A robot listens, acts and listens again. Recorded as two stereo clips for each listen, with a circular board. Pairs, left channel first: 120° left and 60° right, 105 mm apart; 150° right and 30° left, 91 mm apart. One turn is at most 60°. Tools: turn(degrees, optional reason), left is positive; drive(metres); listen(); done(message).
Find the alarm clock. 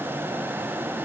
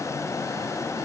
listen()
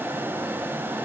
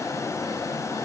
listen()
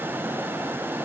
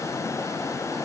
done("I can't make out an alarm clock.")